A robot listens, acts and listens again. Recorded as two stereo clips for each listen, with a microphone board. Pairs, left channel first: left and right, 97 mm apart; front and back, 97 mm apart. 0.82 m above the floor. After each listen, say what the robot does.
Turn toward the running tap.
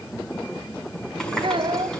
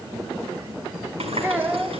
Turn 175° left.
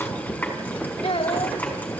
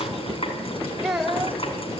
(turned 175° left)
Turn 20° left.
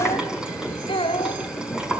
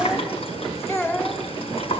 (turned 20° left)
Turn 10° right.
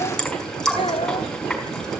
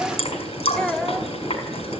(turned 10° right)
Facing the running tap, over 4 m away.